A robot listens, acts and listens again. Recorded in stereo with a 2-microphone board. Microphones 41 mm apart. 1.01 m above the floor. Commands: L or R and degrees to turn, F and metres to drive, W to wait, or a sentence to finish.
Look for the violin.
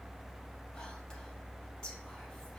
W
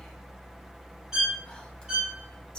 R15
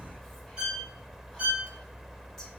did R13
R150
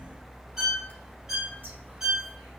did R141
R10
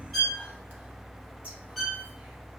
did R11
Facing the violin.